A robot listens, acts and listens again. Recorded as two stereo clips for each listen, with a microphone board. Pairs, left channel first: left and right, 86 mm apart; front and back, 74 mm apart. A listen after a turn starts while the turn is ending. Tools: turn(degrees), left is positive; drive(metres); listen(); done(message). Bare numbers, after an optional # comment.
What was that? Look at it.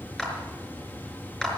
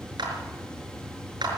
# The clap: 170° left.
turn(170)
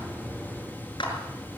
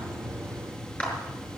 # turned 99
# The clap is now 70° left.
turn(70)
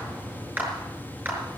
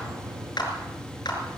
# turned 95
# The clap is now 20° right.
turn(-20)
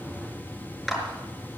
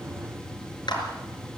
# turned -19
done("Facing the clap.")